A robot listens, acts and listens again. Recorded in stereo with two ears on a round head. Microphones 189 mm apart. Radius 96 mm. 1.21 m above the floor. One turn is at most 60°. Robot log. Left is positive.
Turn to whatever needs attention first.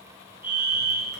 cmd yaw -30
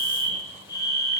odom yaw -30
note: So it is at 20° left.
cmd yaw +20
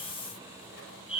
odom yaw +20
end: Found it: a fire alarm, straight ahead.